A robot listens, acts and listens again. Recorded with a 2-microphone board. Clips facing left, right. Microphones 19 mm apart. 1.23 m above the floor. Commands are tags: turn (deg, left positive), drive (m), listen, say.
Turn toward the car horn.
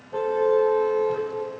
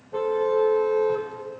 <turn deg="30"/>
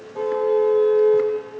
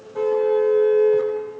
<turn deg="-25"/>
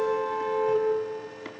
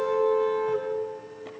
<say>Facing the car horn.</say>